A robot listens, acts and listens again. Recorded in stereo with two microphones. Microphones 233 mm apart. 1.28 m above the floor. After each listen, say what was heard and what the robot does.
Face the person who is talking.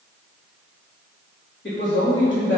The man speaking: about 50° left or 130° left. Turn 50° left.
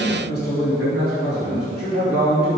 So it is at 80° left. Turn 80° left.
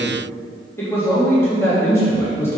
The man speaking is now 10° left. Turn 10° left.
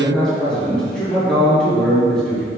Facing the man speaking.